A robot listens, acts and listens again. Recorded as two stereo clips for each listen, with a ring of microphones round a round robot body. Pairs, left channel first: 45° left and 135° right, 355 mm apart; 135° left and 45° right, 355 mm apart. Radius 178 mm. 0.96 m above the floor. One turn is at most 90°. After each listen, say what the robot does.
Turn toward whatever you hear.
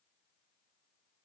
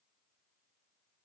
Keep listening.
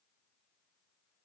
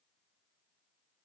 Keep listening.
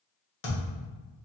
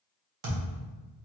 Turn 10° right.
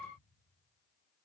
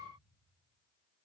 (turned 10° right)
Facing where the thud came from. I can't hear it now.